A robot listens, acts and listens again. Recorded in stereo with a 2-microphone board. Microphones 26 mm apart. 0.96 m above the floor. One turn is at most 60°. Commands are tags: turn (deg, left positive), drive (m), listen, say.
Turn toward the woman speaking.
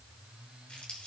<listen/>
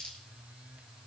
<listen/>
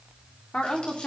<turn deg="50"/>
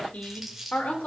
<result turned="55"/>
<turn deg="60"/>
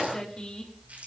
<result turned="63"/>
<turn deg="35"/>
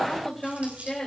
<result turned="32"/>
<turn deg="10"/>
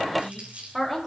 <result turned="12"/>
<say>Facing the woman speaking.</say>